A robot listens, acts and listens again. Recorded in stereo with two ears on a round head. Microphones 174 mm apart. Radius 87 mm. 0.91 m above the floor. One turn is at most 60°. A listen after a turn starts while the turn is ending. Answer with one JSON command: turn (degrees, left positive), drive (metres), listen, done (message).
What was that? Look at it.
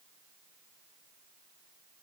{"listen": true}
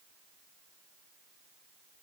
{"listen": true}
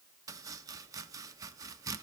{"turn": -20}
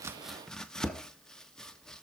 {"done": "Facing the chopping."}